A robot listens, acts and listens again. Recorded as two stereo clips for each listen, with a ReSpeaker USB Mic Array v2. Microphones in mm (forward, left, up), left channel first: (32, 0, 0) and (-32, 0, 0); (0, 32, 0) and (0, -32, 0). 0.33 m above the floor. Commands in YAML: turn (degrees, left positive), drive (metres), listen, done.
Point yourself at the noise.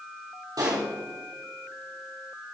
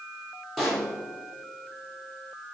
turn: 180
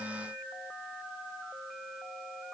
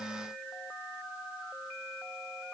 done: "Facing where the pop came from. I can't hear it now."